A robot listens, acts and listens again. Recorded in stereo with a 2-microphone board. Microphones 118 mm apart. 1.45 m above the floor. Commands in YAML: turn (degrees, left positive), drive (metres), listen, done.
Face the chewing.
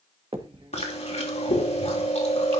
turn: 65
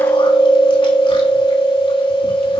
turn: 50
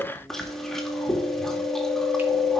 done: "Facing the chewing, 2 to 4 m away."